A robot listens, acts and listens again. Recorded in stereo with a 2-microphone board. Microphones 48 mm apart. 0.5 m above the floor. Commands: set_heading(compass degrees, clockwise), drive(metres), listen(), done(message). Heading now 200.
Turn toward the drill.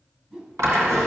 set_heading(290)
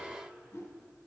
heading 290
listen()
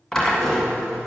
set_heading(280)
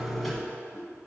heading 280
done("Found it: a drill, straight ahead.")